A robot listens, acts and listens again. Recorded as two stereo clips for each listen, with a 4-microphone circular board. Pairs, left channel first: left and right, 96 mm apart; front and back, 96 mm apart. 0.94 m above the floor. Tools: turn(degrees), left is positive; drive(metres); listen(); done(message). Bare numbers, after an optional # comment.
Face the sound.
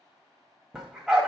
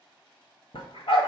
done("Facing the dog barking, 1 to 2 m away.")